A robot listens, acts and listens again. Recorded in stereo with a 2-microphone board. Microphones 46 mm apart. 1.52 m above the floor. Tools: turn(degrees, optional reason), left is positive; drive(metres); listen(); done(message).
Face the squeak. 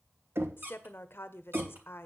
turn(degrees=-55, reason="The squeak: about 55° right or 125° right.")
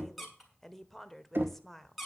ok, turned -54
done("Facing the squeak, 2 to 4 m away.")